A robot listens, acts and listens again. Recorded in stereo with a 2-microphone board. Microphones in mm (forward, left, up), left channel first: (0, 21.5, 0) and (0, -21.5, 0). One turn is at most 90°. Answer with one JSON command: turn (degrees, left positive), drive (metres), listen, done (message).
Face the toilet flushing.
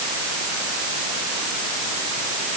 {"listen": true}
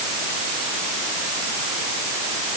{"listen": true}
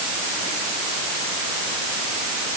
{"done": "I can't make out a toilet flushing to turn to."}